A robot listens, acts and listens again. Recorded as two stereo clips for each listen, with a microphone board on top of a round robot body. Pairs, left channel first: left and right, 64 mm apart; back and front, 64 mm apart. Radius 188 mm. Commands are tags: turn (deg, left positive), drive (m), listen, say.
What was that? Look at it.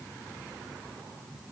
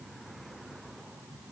<listen/>
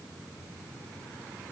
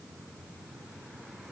<listen/>
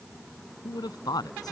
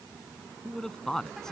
<turn deg="95"/>
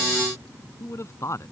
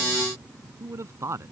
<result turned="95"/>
<turn deg="45"/>
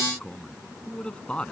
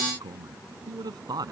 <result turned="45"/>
<turn deg="15"/>
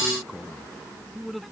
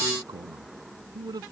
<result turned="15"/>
<say>Found it: a man speaking, straight ahead.</say>